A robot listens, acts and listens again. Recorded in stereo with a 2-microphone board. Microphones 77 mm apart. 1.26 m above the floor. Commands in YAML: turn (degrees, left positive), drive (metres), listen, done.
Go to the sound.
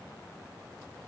listen: true
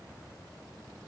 listen: true
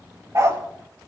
turn: -40
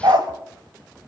turn: -95
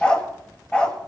turn: 15
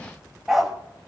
drive: 1.0
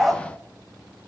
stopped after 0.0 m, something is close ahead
done: "Something is in my way. I am facing the dog barking but have not reached it."